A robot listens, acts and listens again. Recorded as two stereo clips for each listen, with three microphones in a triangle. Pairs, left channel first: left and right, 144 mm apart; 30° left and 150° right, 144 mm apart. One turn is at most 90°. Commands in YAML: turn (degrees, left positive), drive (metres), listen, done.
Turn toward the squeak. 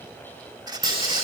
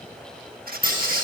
turn: -90
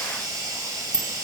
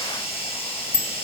turn: -65
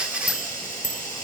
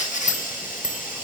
done: "Found it: a squeak, straight ahead, 1 to 2 m away."